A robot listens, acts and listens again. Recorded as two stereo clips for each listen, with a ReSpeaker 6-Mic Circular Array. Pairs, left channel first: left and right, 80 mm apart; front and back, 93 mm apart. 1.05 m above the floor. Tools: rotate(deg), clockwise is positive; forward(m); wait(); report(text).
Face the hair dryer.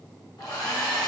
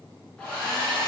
rotate(-75)
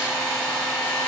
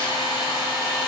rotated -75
rotate(-15)
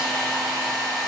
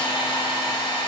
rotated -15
report("Found it: a hair dryer, straight ahead, under 1 m away.")